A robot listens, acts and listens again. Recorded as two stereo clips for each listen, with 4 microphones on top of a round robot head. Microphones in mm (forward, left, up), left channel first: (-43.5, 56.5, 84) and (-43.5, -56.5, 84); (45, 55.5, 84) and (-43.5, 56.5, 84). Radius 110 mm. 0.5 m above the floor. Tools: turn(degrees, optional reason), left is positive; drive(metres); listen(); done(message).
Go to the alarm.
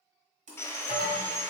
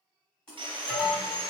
turn(degrees=75, reason="The alarm: 75° left.")
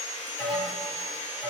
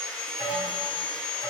drive(metres=1.0)
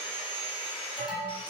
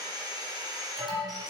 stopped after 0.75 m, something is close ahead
done("Arrived at the alarm, straight ahead.")